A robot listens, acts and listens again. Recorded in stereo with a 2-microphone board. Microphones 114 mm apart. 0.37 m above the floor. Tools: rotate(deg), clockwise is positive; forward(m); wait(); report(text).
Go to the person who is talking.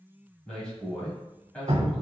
rotate(-30)
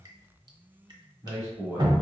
rotate(20)
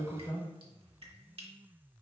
forward(1.0)
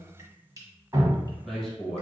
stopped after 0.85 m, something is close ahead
report("I am next to the man speaking.")